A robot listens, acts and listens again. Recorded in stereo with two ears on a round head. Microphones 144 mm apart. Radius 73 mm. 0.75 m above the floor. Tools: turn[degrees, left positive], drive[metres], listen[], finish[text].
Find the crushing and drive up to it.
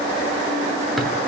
Action: listen[]
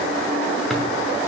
Action: listen[]
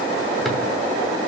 Action: finish[I can't make out crushing to turn to.]